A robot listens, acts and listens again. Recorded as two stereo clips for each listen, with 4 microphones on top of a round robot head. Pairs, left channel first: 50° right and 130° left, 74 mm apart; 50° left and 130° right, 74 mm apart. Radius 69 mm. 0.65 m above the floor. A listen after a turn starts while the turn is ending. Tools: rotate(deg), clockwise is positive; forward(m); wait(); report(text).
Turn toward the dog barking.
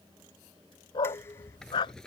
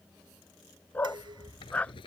rotate(25)
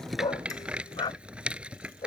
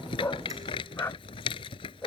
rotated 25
rotate(15)
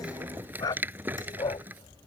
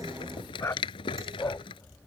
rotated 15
rotate(10)
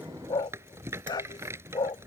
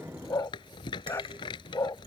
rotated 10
report("Facing the dog barking.")